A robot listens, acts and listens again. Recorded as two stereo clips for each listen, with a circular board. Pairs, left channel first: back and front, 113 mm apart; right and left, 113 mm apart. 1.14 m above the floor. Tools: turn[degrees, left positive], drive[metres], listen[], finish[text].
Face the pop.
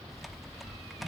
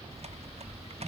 Action: listen[]
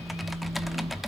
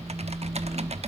Action: listen[]
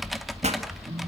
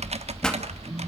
Action: finish[Found it: a pop, straight ahead.]